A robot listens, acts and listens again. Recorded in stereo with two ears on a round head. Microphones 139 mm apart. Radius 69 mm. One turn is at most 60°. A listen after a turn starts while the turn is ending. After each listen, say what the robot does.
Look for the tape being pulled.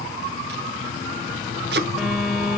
Turn 60° right.
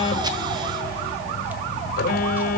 Keep listening.
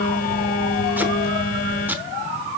Turn 10° right.
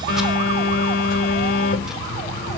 Keep listening.
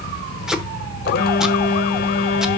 Found it: tape being pulled, straight ahead, under 1 m away.